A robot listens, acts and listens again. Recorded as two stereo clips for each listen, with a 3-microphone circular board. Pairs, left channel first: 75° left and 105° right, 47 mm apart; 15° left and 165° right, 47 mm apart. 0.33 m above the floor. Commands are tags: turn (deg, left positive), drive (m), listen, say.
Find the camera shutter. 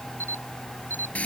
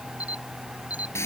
<turn deg="-105"/>
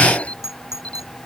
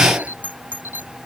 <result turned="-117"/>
<turn deg="15"/>
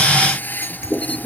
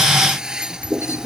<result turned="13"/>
<listen/>
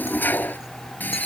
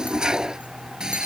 <listen/>
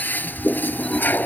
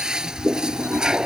<say>Facing where the camera shutter came from. I can't hear it now.</say>